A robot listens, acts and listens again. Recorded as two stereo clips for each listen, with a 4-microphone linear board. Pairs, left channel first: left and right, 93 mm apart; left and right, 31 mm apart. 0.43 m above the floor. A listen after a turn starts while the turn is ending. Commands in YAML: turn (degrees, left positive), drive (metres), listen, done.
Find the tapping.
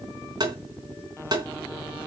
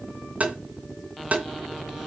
turn: -45
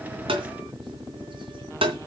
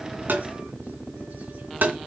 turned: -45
turn: -85
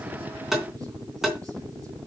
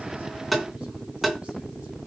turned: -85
done: "Facing the tapping."